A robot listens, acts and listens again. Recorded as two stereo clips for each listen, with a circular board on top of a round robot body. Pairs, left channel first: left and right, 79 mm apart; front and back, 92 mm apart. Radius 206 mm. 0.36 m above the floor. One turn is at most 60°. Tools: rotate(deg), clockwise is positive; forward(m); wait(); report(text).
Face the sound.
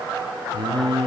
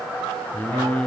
rotate(60)
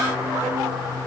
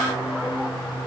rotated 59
rotate(30)
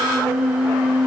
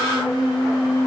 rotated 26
rotate(15)
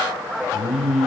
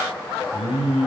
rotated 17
report("Found it: singing, straight ahead, over 4 m away.")